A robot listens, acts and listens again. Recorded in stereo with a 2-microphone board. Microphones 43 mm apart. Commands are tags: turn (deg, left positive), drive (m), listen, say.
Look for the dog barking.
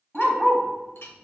<turn deg="30"/>
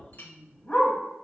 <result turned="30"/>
<turn deg="145"/>
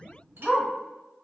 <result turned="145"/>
<turn deg="15"/>
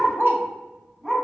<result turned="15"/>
<say>Facing the dog barking.</say>